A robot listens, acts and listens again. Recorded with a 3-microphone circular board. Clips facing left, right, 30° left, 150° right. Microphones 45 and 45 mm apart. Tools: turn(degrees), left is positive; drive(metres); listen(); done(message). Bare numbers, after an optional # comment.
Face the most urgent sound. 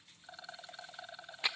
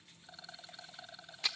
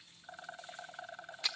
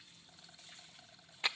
listen()
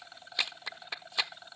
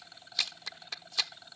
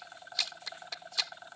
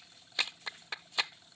listen()
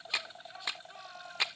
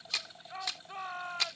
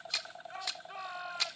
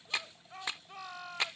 # The shout: 45° right.
turn(-45)
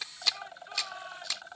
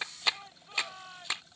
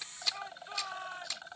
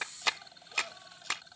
# The shout is now 10° left.
turn(10)
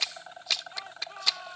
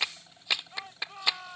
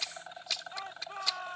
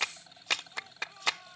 done("Found it: a shout, straight ahead.")